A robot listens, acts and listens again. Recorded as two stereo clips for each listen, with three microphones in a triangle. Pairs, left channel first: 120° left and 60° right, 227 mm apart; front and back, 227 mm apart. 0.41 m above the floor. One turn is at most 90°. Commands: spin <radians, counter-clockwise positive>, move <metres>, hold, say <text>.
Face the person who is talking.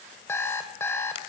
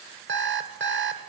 hold
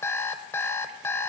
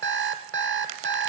hold
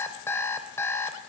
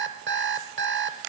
say I can't make out anyone speaking, only an alarm clock.